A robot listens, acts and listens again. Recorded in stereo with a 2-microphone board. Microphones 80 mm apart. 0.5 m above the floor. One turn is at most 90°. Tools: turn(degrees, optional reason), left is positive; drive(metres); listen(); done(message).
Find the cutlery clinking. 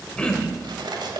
turn(degrees=-75, reason="The cutlery clinking: about 75° right or 105° right.")
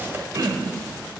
listen()
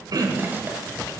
listen()
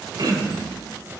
done("I heard cutlery clinking, but can't make it out now. It was about straight ahead or 30° right.")